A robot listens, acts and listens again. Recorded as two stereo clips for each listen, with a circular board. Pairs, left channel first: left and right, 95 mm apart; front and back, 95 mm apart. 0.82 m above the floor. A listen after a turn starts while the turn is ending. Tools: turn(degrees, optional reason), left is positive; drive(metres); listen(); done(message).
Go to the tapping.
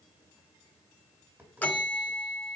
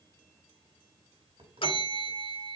turn(degrees=-160, reason="The tapping: 160° right.")
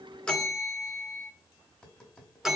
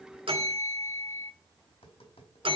drive(metres=1.0)
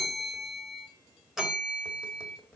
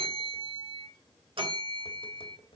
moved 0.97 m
turn(degrees=10, reason="The tapping is now 10° left.")
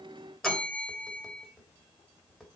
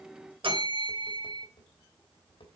drive(metres=1.0)
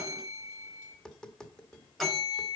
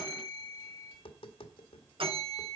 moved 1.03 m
drive(metres=1.0)
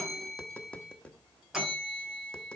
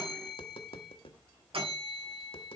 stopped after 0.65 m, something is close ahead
turn(degrees=10, reason="The tapping is now 10° left.")
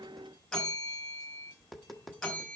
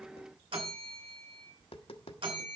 done("I am next to the tapping.")